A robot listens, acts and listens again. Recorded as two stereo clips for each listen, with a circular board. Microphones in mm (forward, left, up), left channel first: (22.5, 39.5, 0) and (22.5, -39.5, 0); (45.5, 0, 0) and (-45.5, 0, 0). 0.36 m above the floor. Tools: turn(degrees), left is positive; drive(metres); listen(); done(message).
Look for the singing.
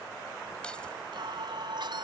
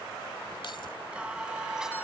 turn(degrees=-95)
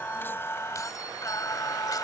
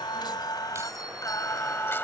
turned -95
turn(degrees=65)
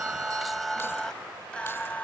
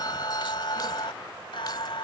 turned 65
turn(degrees=20)
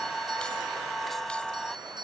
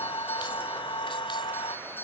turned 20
done("Found it: singing, straight ahead.")